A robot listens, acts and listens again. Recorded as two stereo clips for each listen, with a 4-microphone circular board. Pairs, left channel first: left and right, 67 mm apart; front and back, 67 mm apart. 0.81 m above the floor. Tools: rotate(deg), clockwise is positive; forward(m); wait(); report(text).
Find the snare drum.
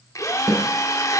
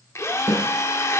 rotate(50)
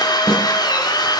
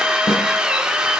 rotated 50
report("Facing the snare drum, over 4 m away.")